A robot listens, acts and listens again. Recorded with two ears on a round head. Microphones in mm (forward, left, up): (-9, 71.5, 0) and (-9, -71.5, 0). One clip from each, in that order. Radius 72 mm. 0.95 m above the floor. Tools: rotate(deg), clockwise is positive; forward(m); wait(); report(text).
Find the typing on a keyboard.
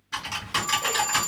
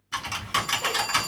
rotate(30)
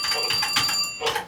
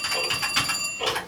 rotate(-20)
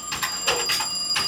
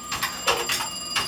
report("Found it: typing on a keyboard, straight ahead.")